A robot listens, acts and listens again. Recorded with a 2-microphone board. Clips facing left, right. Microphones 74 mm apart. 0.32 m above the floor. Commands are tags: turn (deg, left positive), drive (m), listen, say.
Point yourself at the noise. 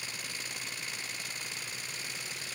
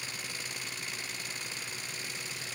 <listen/>
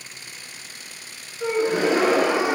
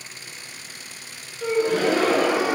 <turn deg="20"/>
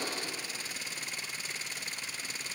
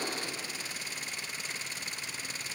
<listen/>
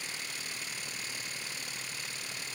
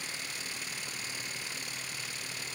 <say>I heard a gasp, but can't make it out now. It was about straight ahead or 140° left.</say>